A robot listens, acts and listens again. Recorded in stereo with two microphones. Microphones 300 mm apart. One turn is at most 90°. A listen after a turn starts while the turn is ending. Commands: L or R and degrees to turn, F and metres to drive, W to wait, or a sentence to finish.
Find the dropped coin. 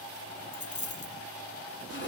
L70
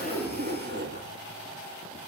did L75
W
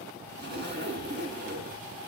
I heard a dropped coin, but can't make it out now. It was about 5° right or 35° left.